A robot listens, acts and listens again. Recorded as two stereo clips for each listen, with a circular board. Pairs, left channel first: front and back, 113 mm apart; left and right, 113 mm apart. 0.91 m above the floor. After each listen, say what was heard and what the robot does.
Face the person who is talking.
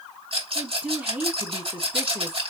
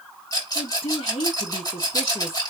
The woman speaking: 105° left. Turn 105° left.
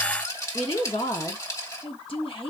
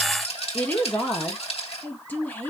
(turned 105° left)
The woman speaking is now 20° left. Turn 20° left.
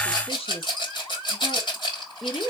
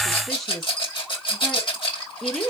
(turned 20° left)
Found it: a woman speaking, straight ahead, 1 to 2 m away.